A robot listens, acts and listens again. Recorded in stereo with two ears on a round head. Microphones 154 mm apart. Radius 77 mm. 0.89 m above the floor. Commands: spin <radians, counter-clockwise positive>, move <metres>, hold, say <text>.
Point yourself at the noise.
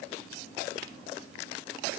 hold
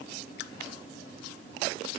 hold
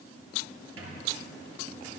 spin -1.57
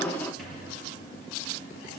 say Found it: a squeak, straight ahead, over 4 m away.